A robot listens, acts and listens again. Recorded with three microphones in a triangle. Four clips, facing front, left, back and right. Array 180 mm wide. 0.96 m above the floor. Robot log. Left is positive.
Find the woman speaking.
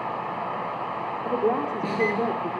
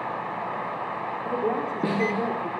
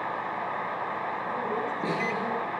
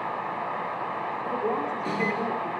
note: The woman speaking: 15° left.
cmd yaw +15
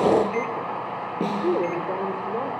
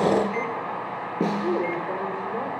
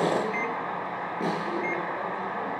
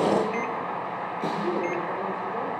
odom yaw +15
note: The woman speaking is now 15° left.
cmd yaw +15
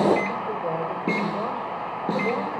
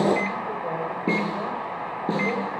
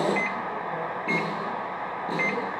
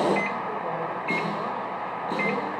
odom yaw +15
cmd idle
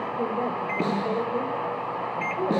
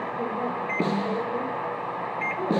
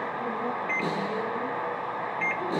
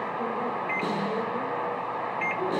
note: The woman speaking is now 15° left.
cmd yaw +15
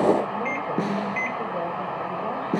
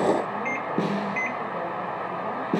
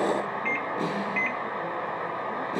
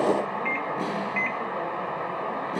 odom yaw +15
cmd idle
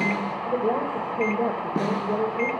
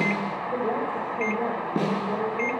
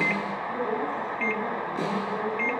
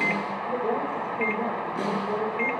end: Found it: a woman speaking, straight ahead, over 4 m away.